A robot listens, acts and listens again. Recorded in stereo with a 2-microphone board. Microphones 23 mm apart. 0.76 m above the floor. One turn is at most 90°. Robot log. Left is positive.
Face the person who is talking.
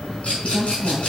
note: The woman speaking: about 70° left or 110° left.
cmd yaw +70
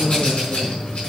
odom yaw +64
end: Found it: a woman speaking, straight ahead, 2 to 4 m away.